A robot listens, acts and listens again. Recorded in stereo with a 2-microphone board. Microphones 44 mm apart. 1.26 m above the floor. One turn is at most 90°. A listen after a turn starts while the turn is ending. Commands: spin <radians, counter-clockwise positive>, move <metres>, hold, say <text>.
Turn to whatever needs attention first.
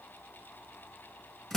hold
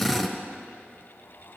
hold
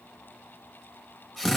say I can't make out anything urgent to turn to.